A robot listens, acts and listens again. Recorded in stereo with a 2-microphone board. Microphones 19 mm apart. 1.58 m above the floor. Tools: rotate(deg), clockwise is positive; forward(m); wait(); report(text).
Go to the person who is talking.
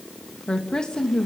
rotate(-45)
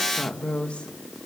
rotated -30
rotate(-105)
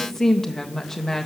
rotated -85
rotate(-20)
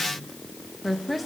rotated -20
forward(1.0)
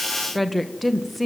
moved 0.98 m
forward(1.0)
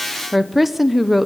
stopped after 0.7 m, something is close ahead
rotate(10)
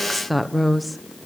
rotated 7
report("I am next to the woman speaking.")